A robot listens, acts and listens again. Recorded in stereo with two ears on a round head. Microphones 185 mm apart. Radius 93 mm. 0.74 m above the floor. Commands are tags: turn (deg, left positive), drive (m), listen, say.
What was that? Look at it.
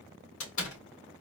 <turn deg="70"/>
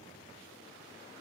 <listen/>
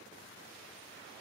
<say>I heard a door slam, but can't make it out now. It was about straight ahead or 40° left.</say>